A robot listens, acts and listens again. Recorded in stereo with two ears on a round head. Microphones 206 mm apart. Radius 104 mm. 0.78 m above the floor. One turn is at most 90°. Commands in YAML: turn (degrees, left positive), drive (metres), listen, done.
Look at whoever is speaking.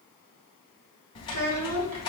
turn: -90
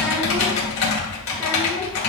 listen: true
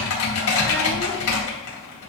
listen: true
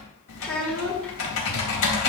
done: "Found it: a child speaking, straight ahead, 1 to 2 m away."